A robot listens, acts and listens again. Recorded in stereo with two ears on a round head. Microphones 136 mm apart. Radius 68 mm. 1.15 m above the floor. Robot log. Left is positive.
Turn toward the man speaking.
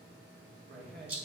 note: The man speaking: about 70° right or 110° right.
cmd yaw -70
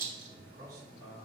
note: So it is at 25° right.
cmd yaw -25
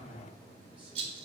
cmd idle
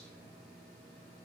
cmd idle
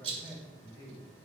note: The man speaking is now 20° right.
cmd yaw -20
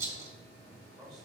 end: Found it: a man speaking, straight ahead, over 4 m away.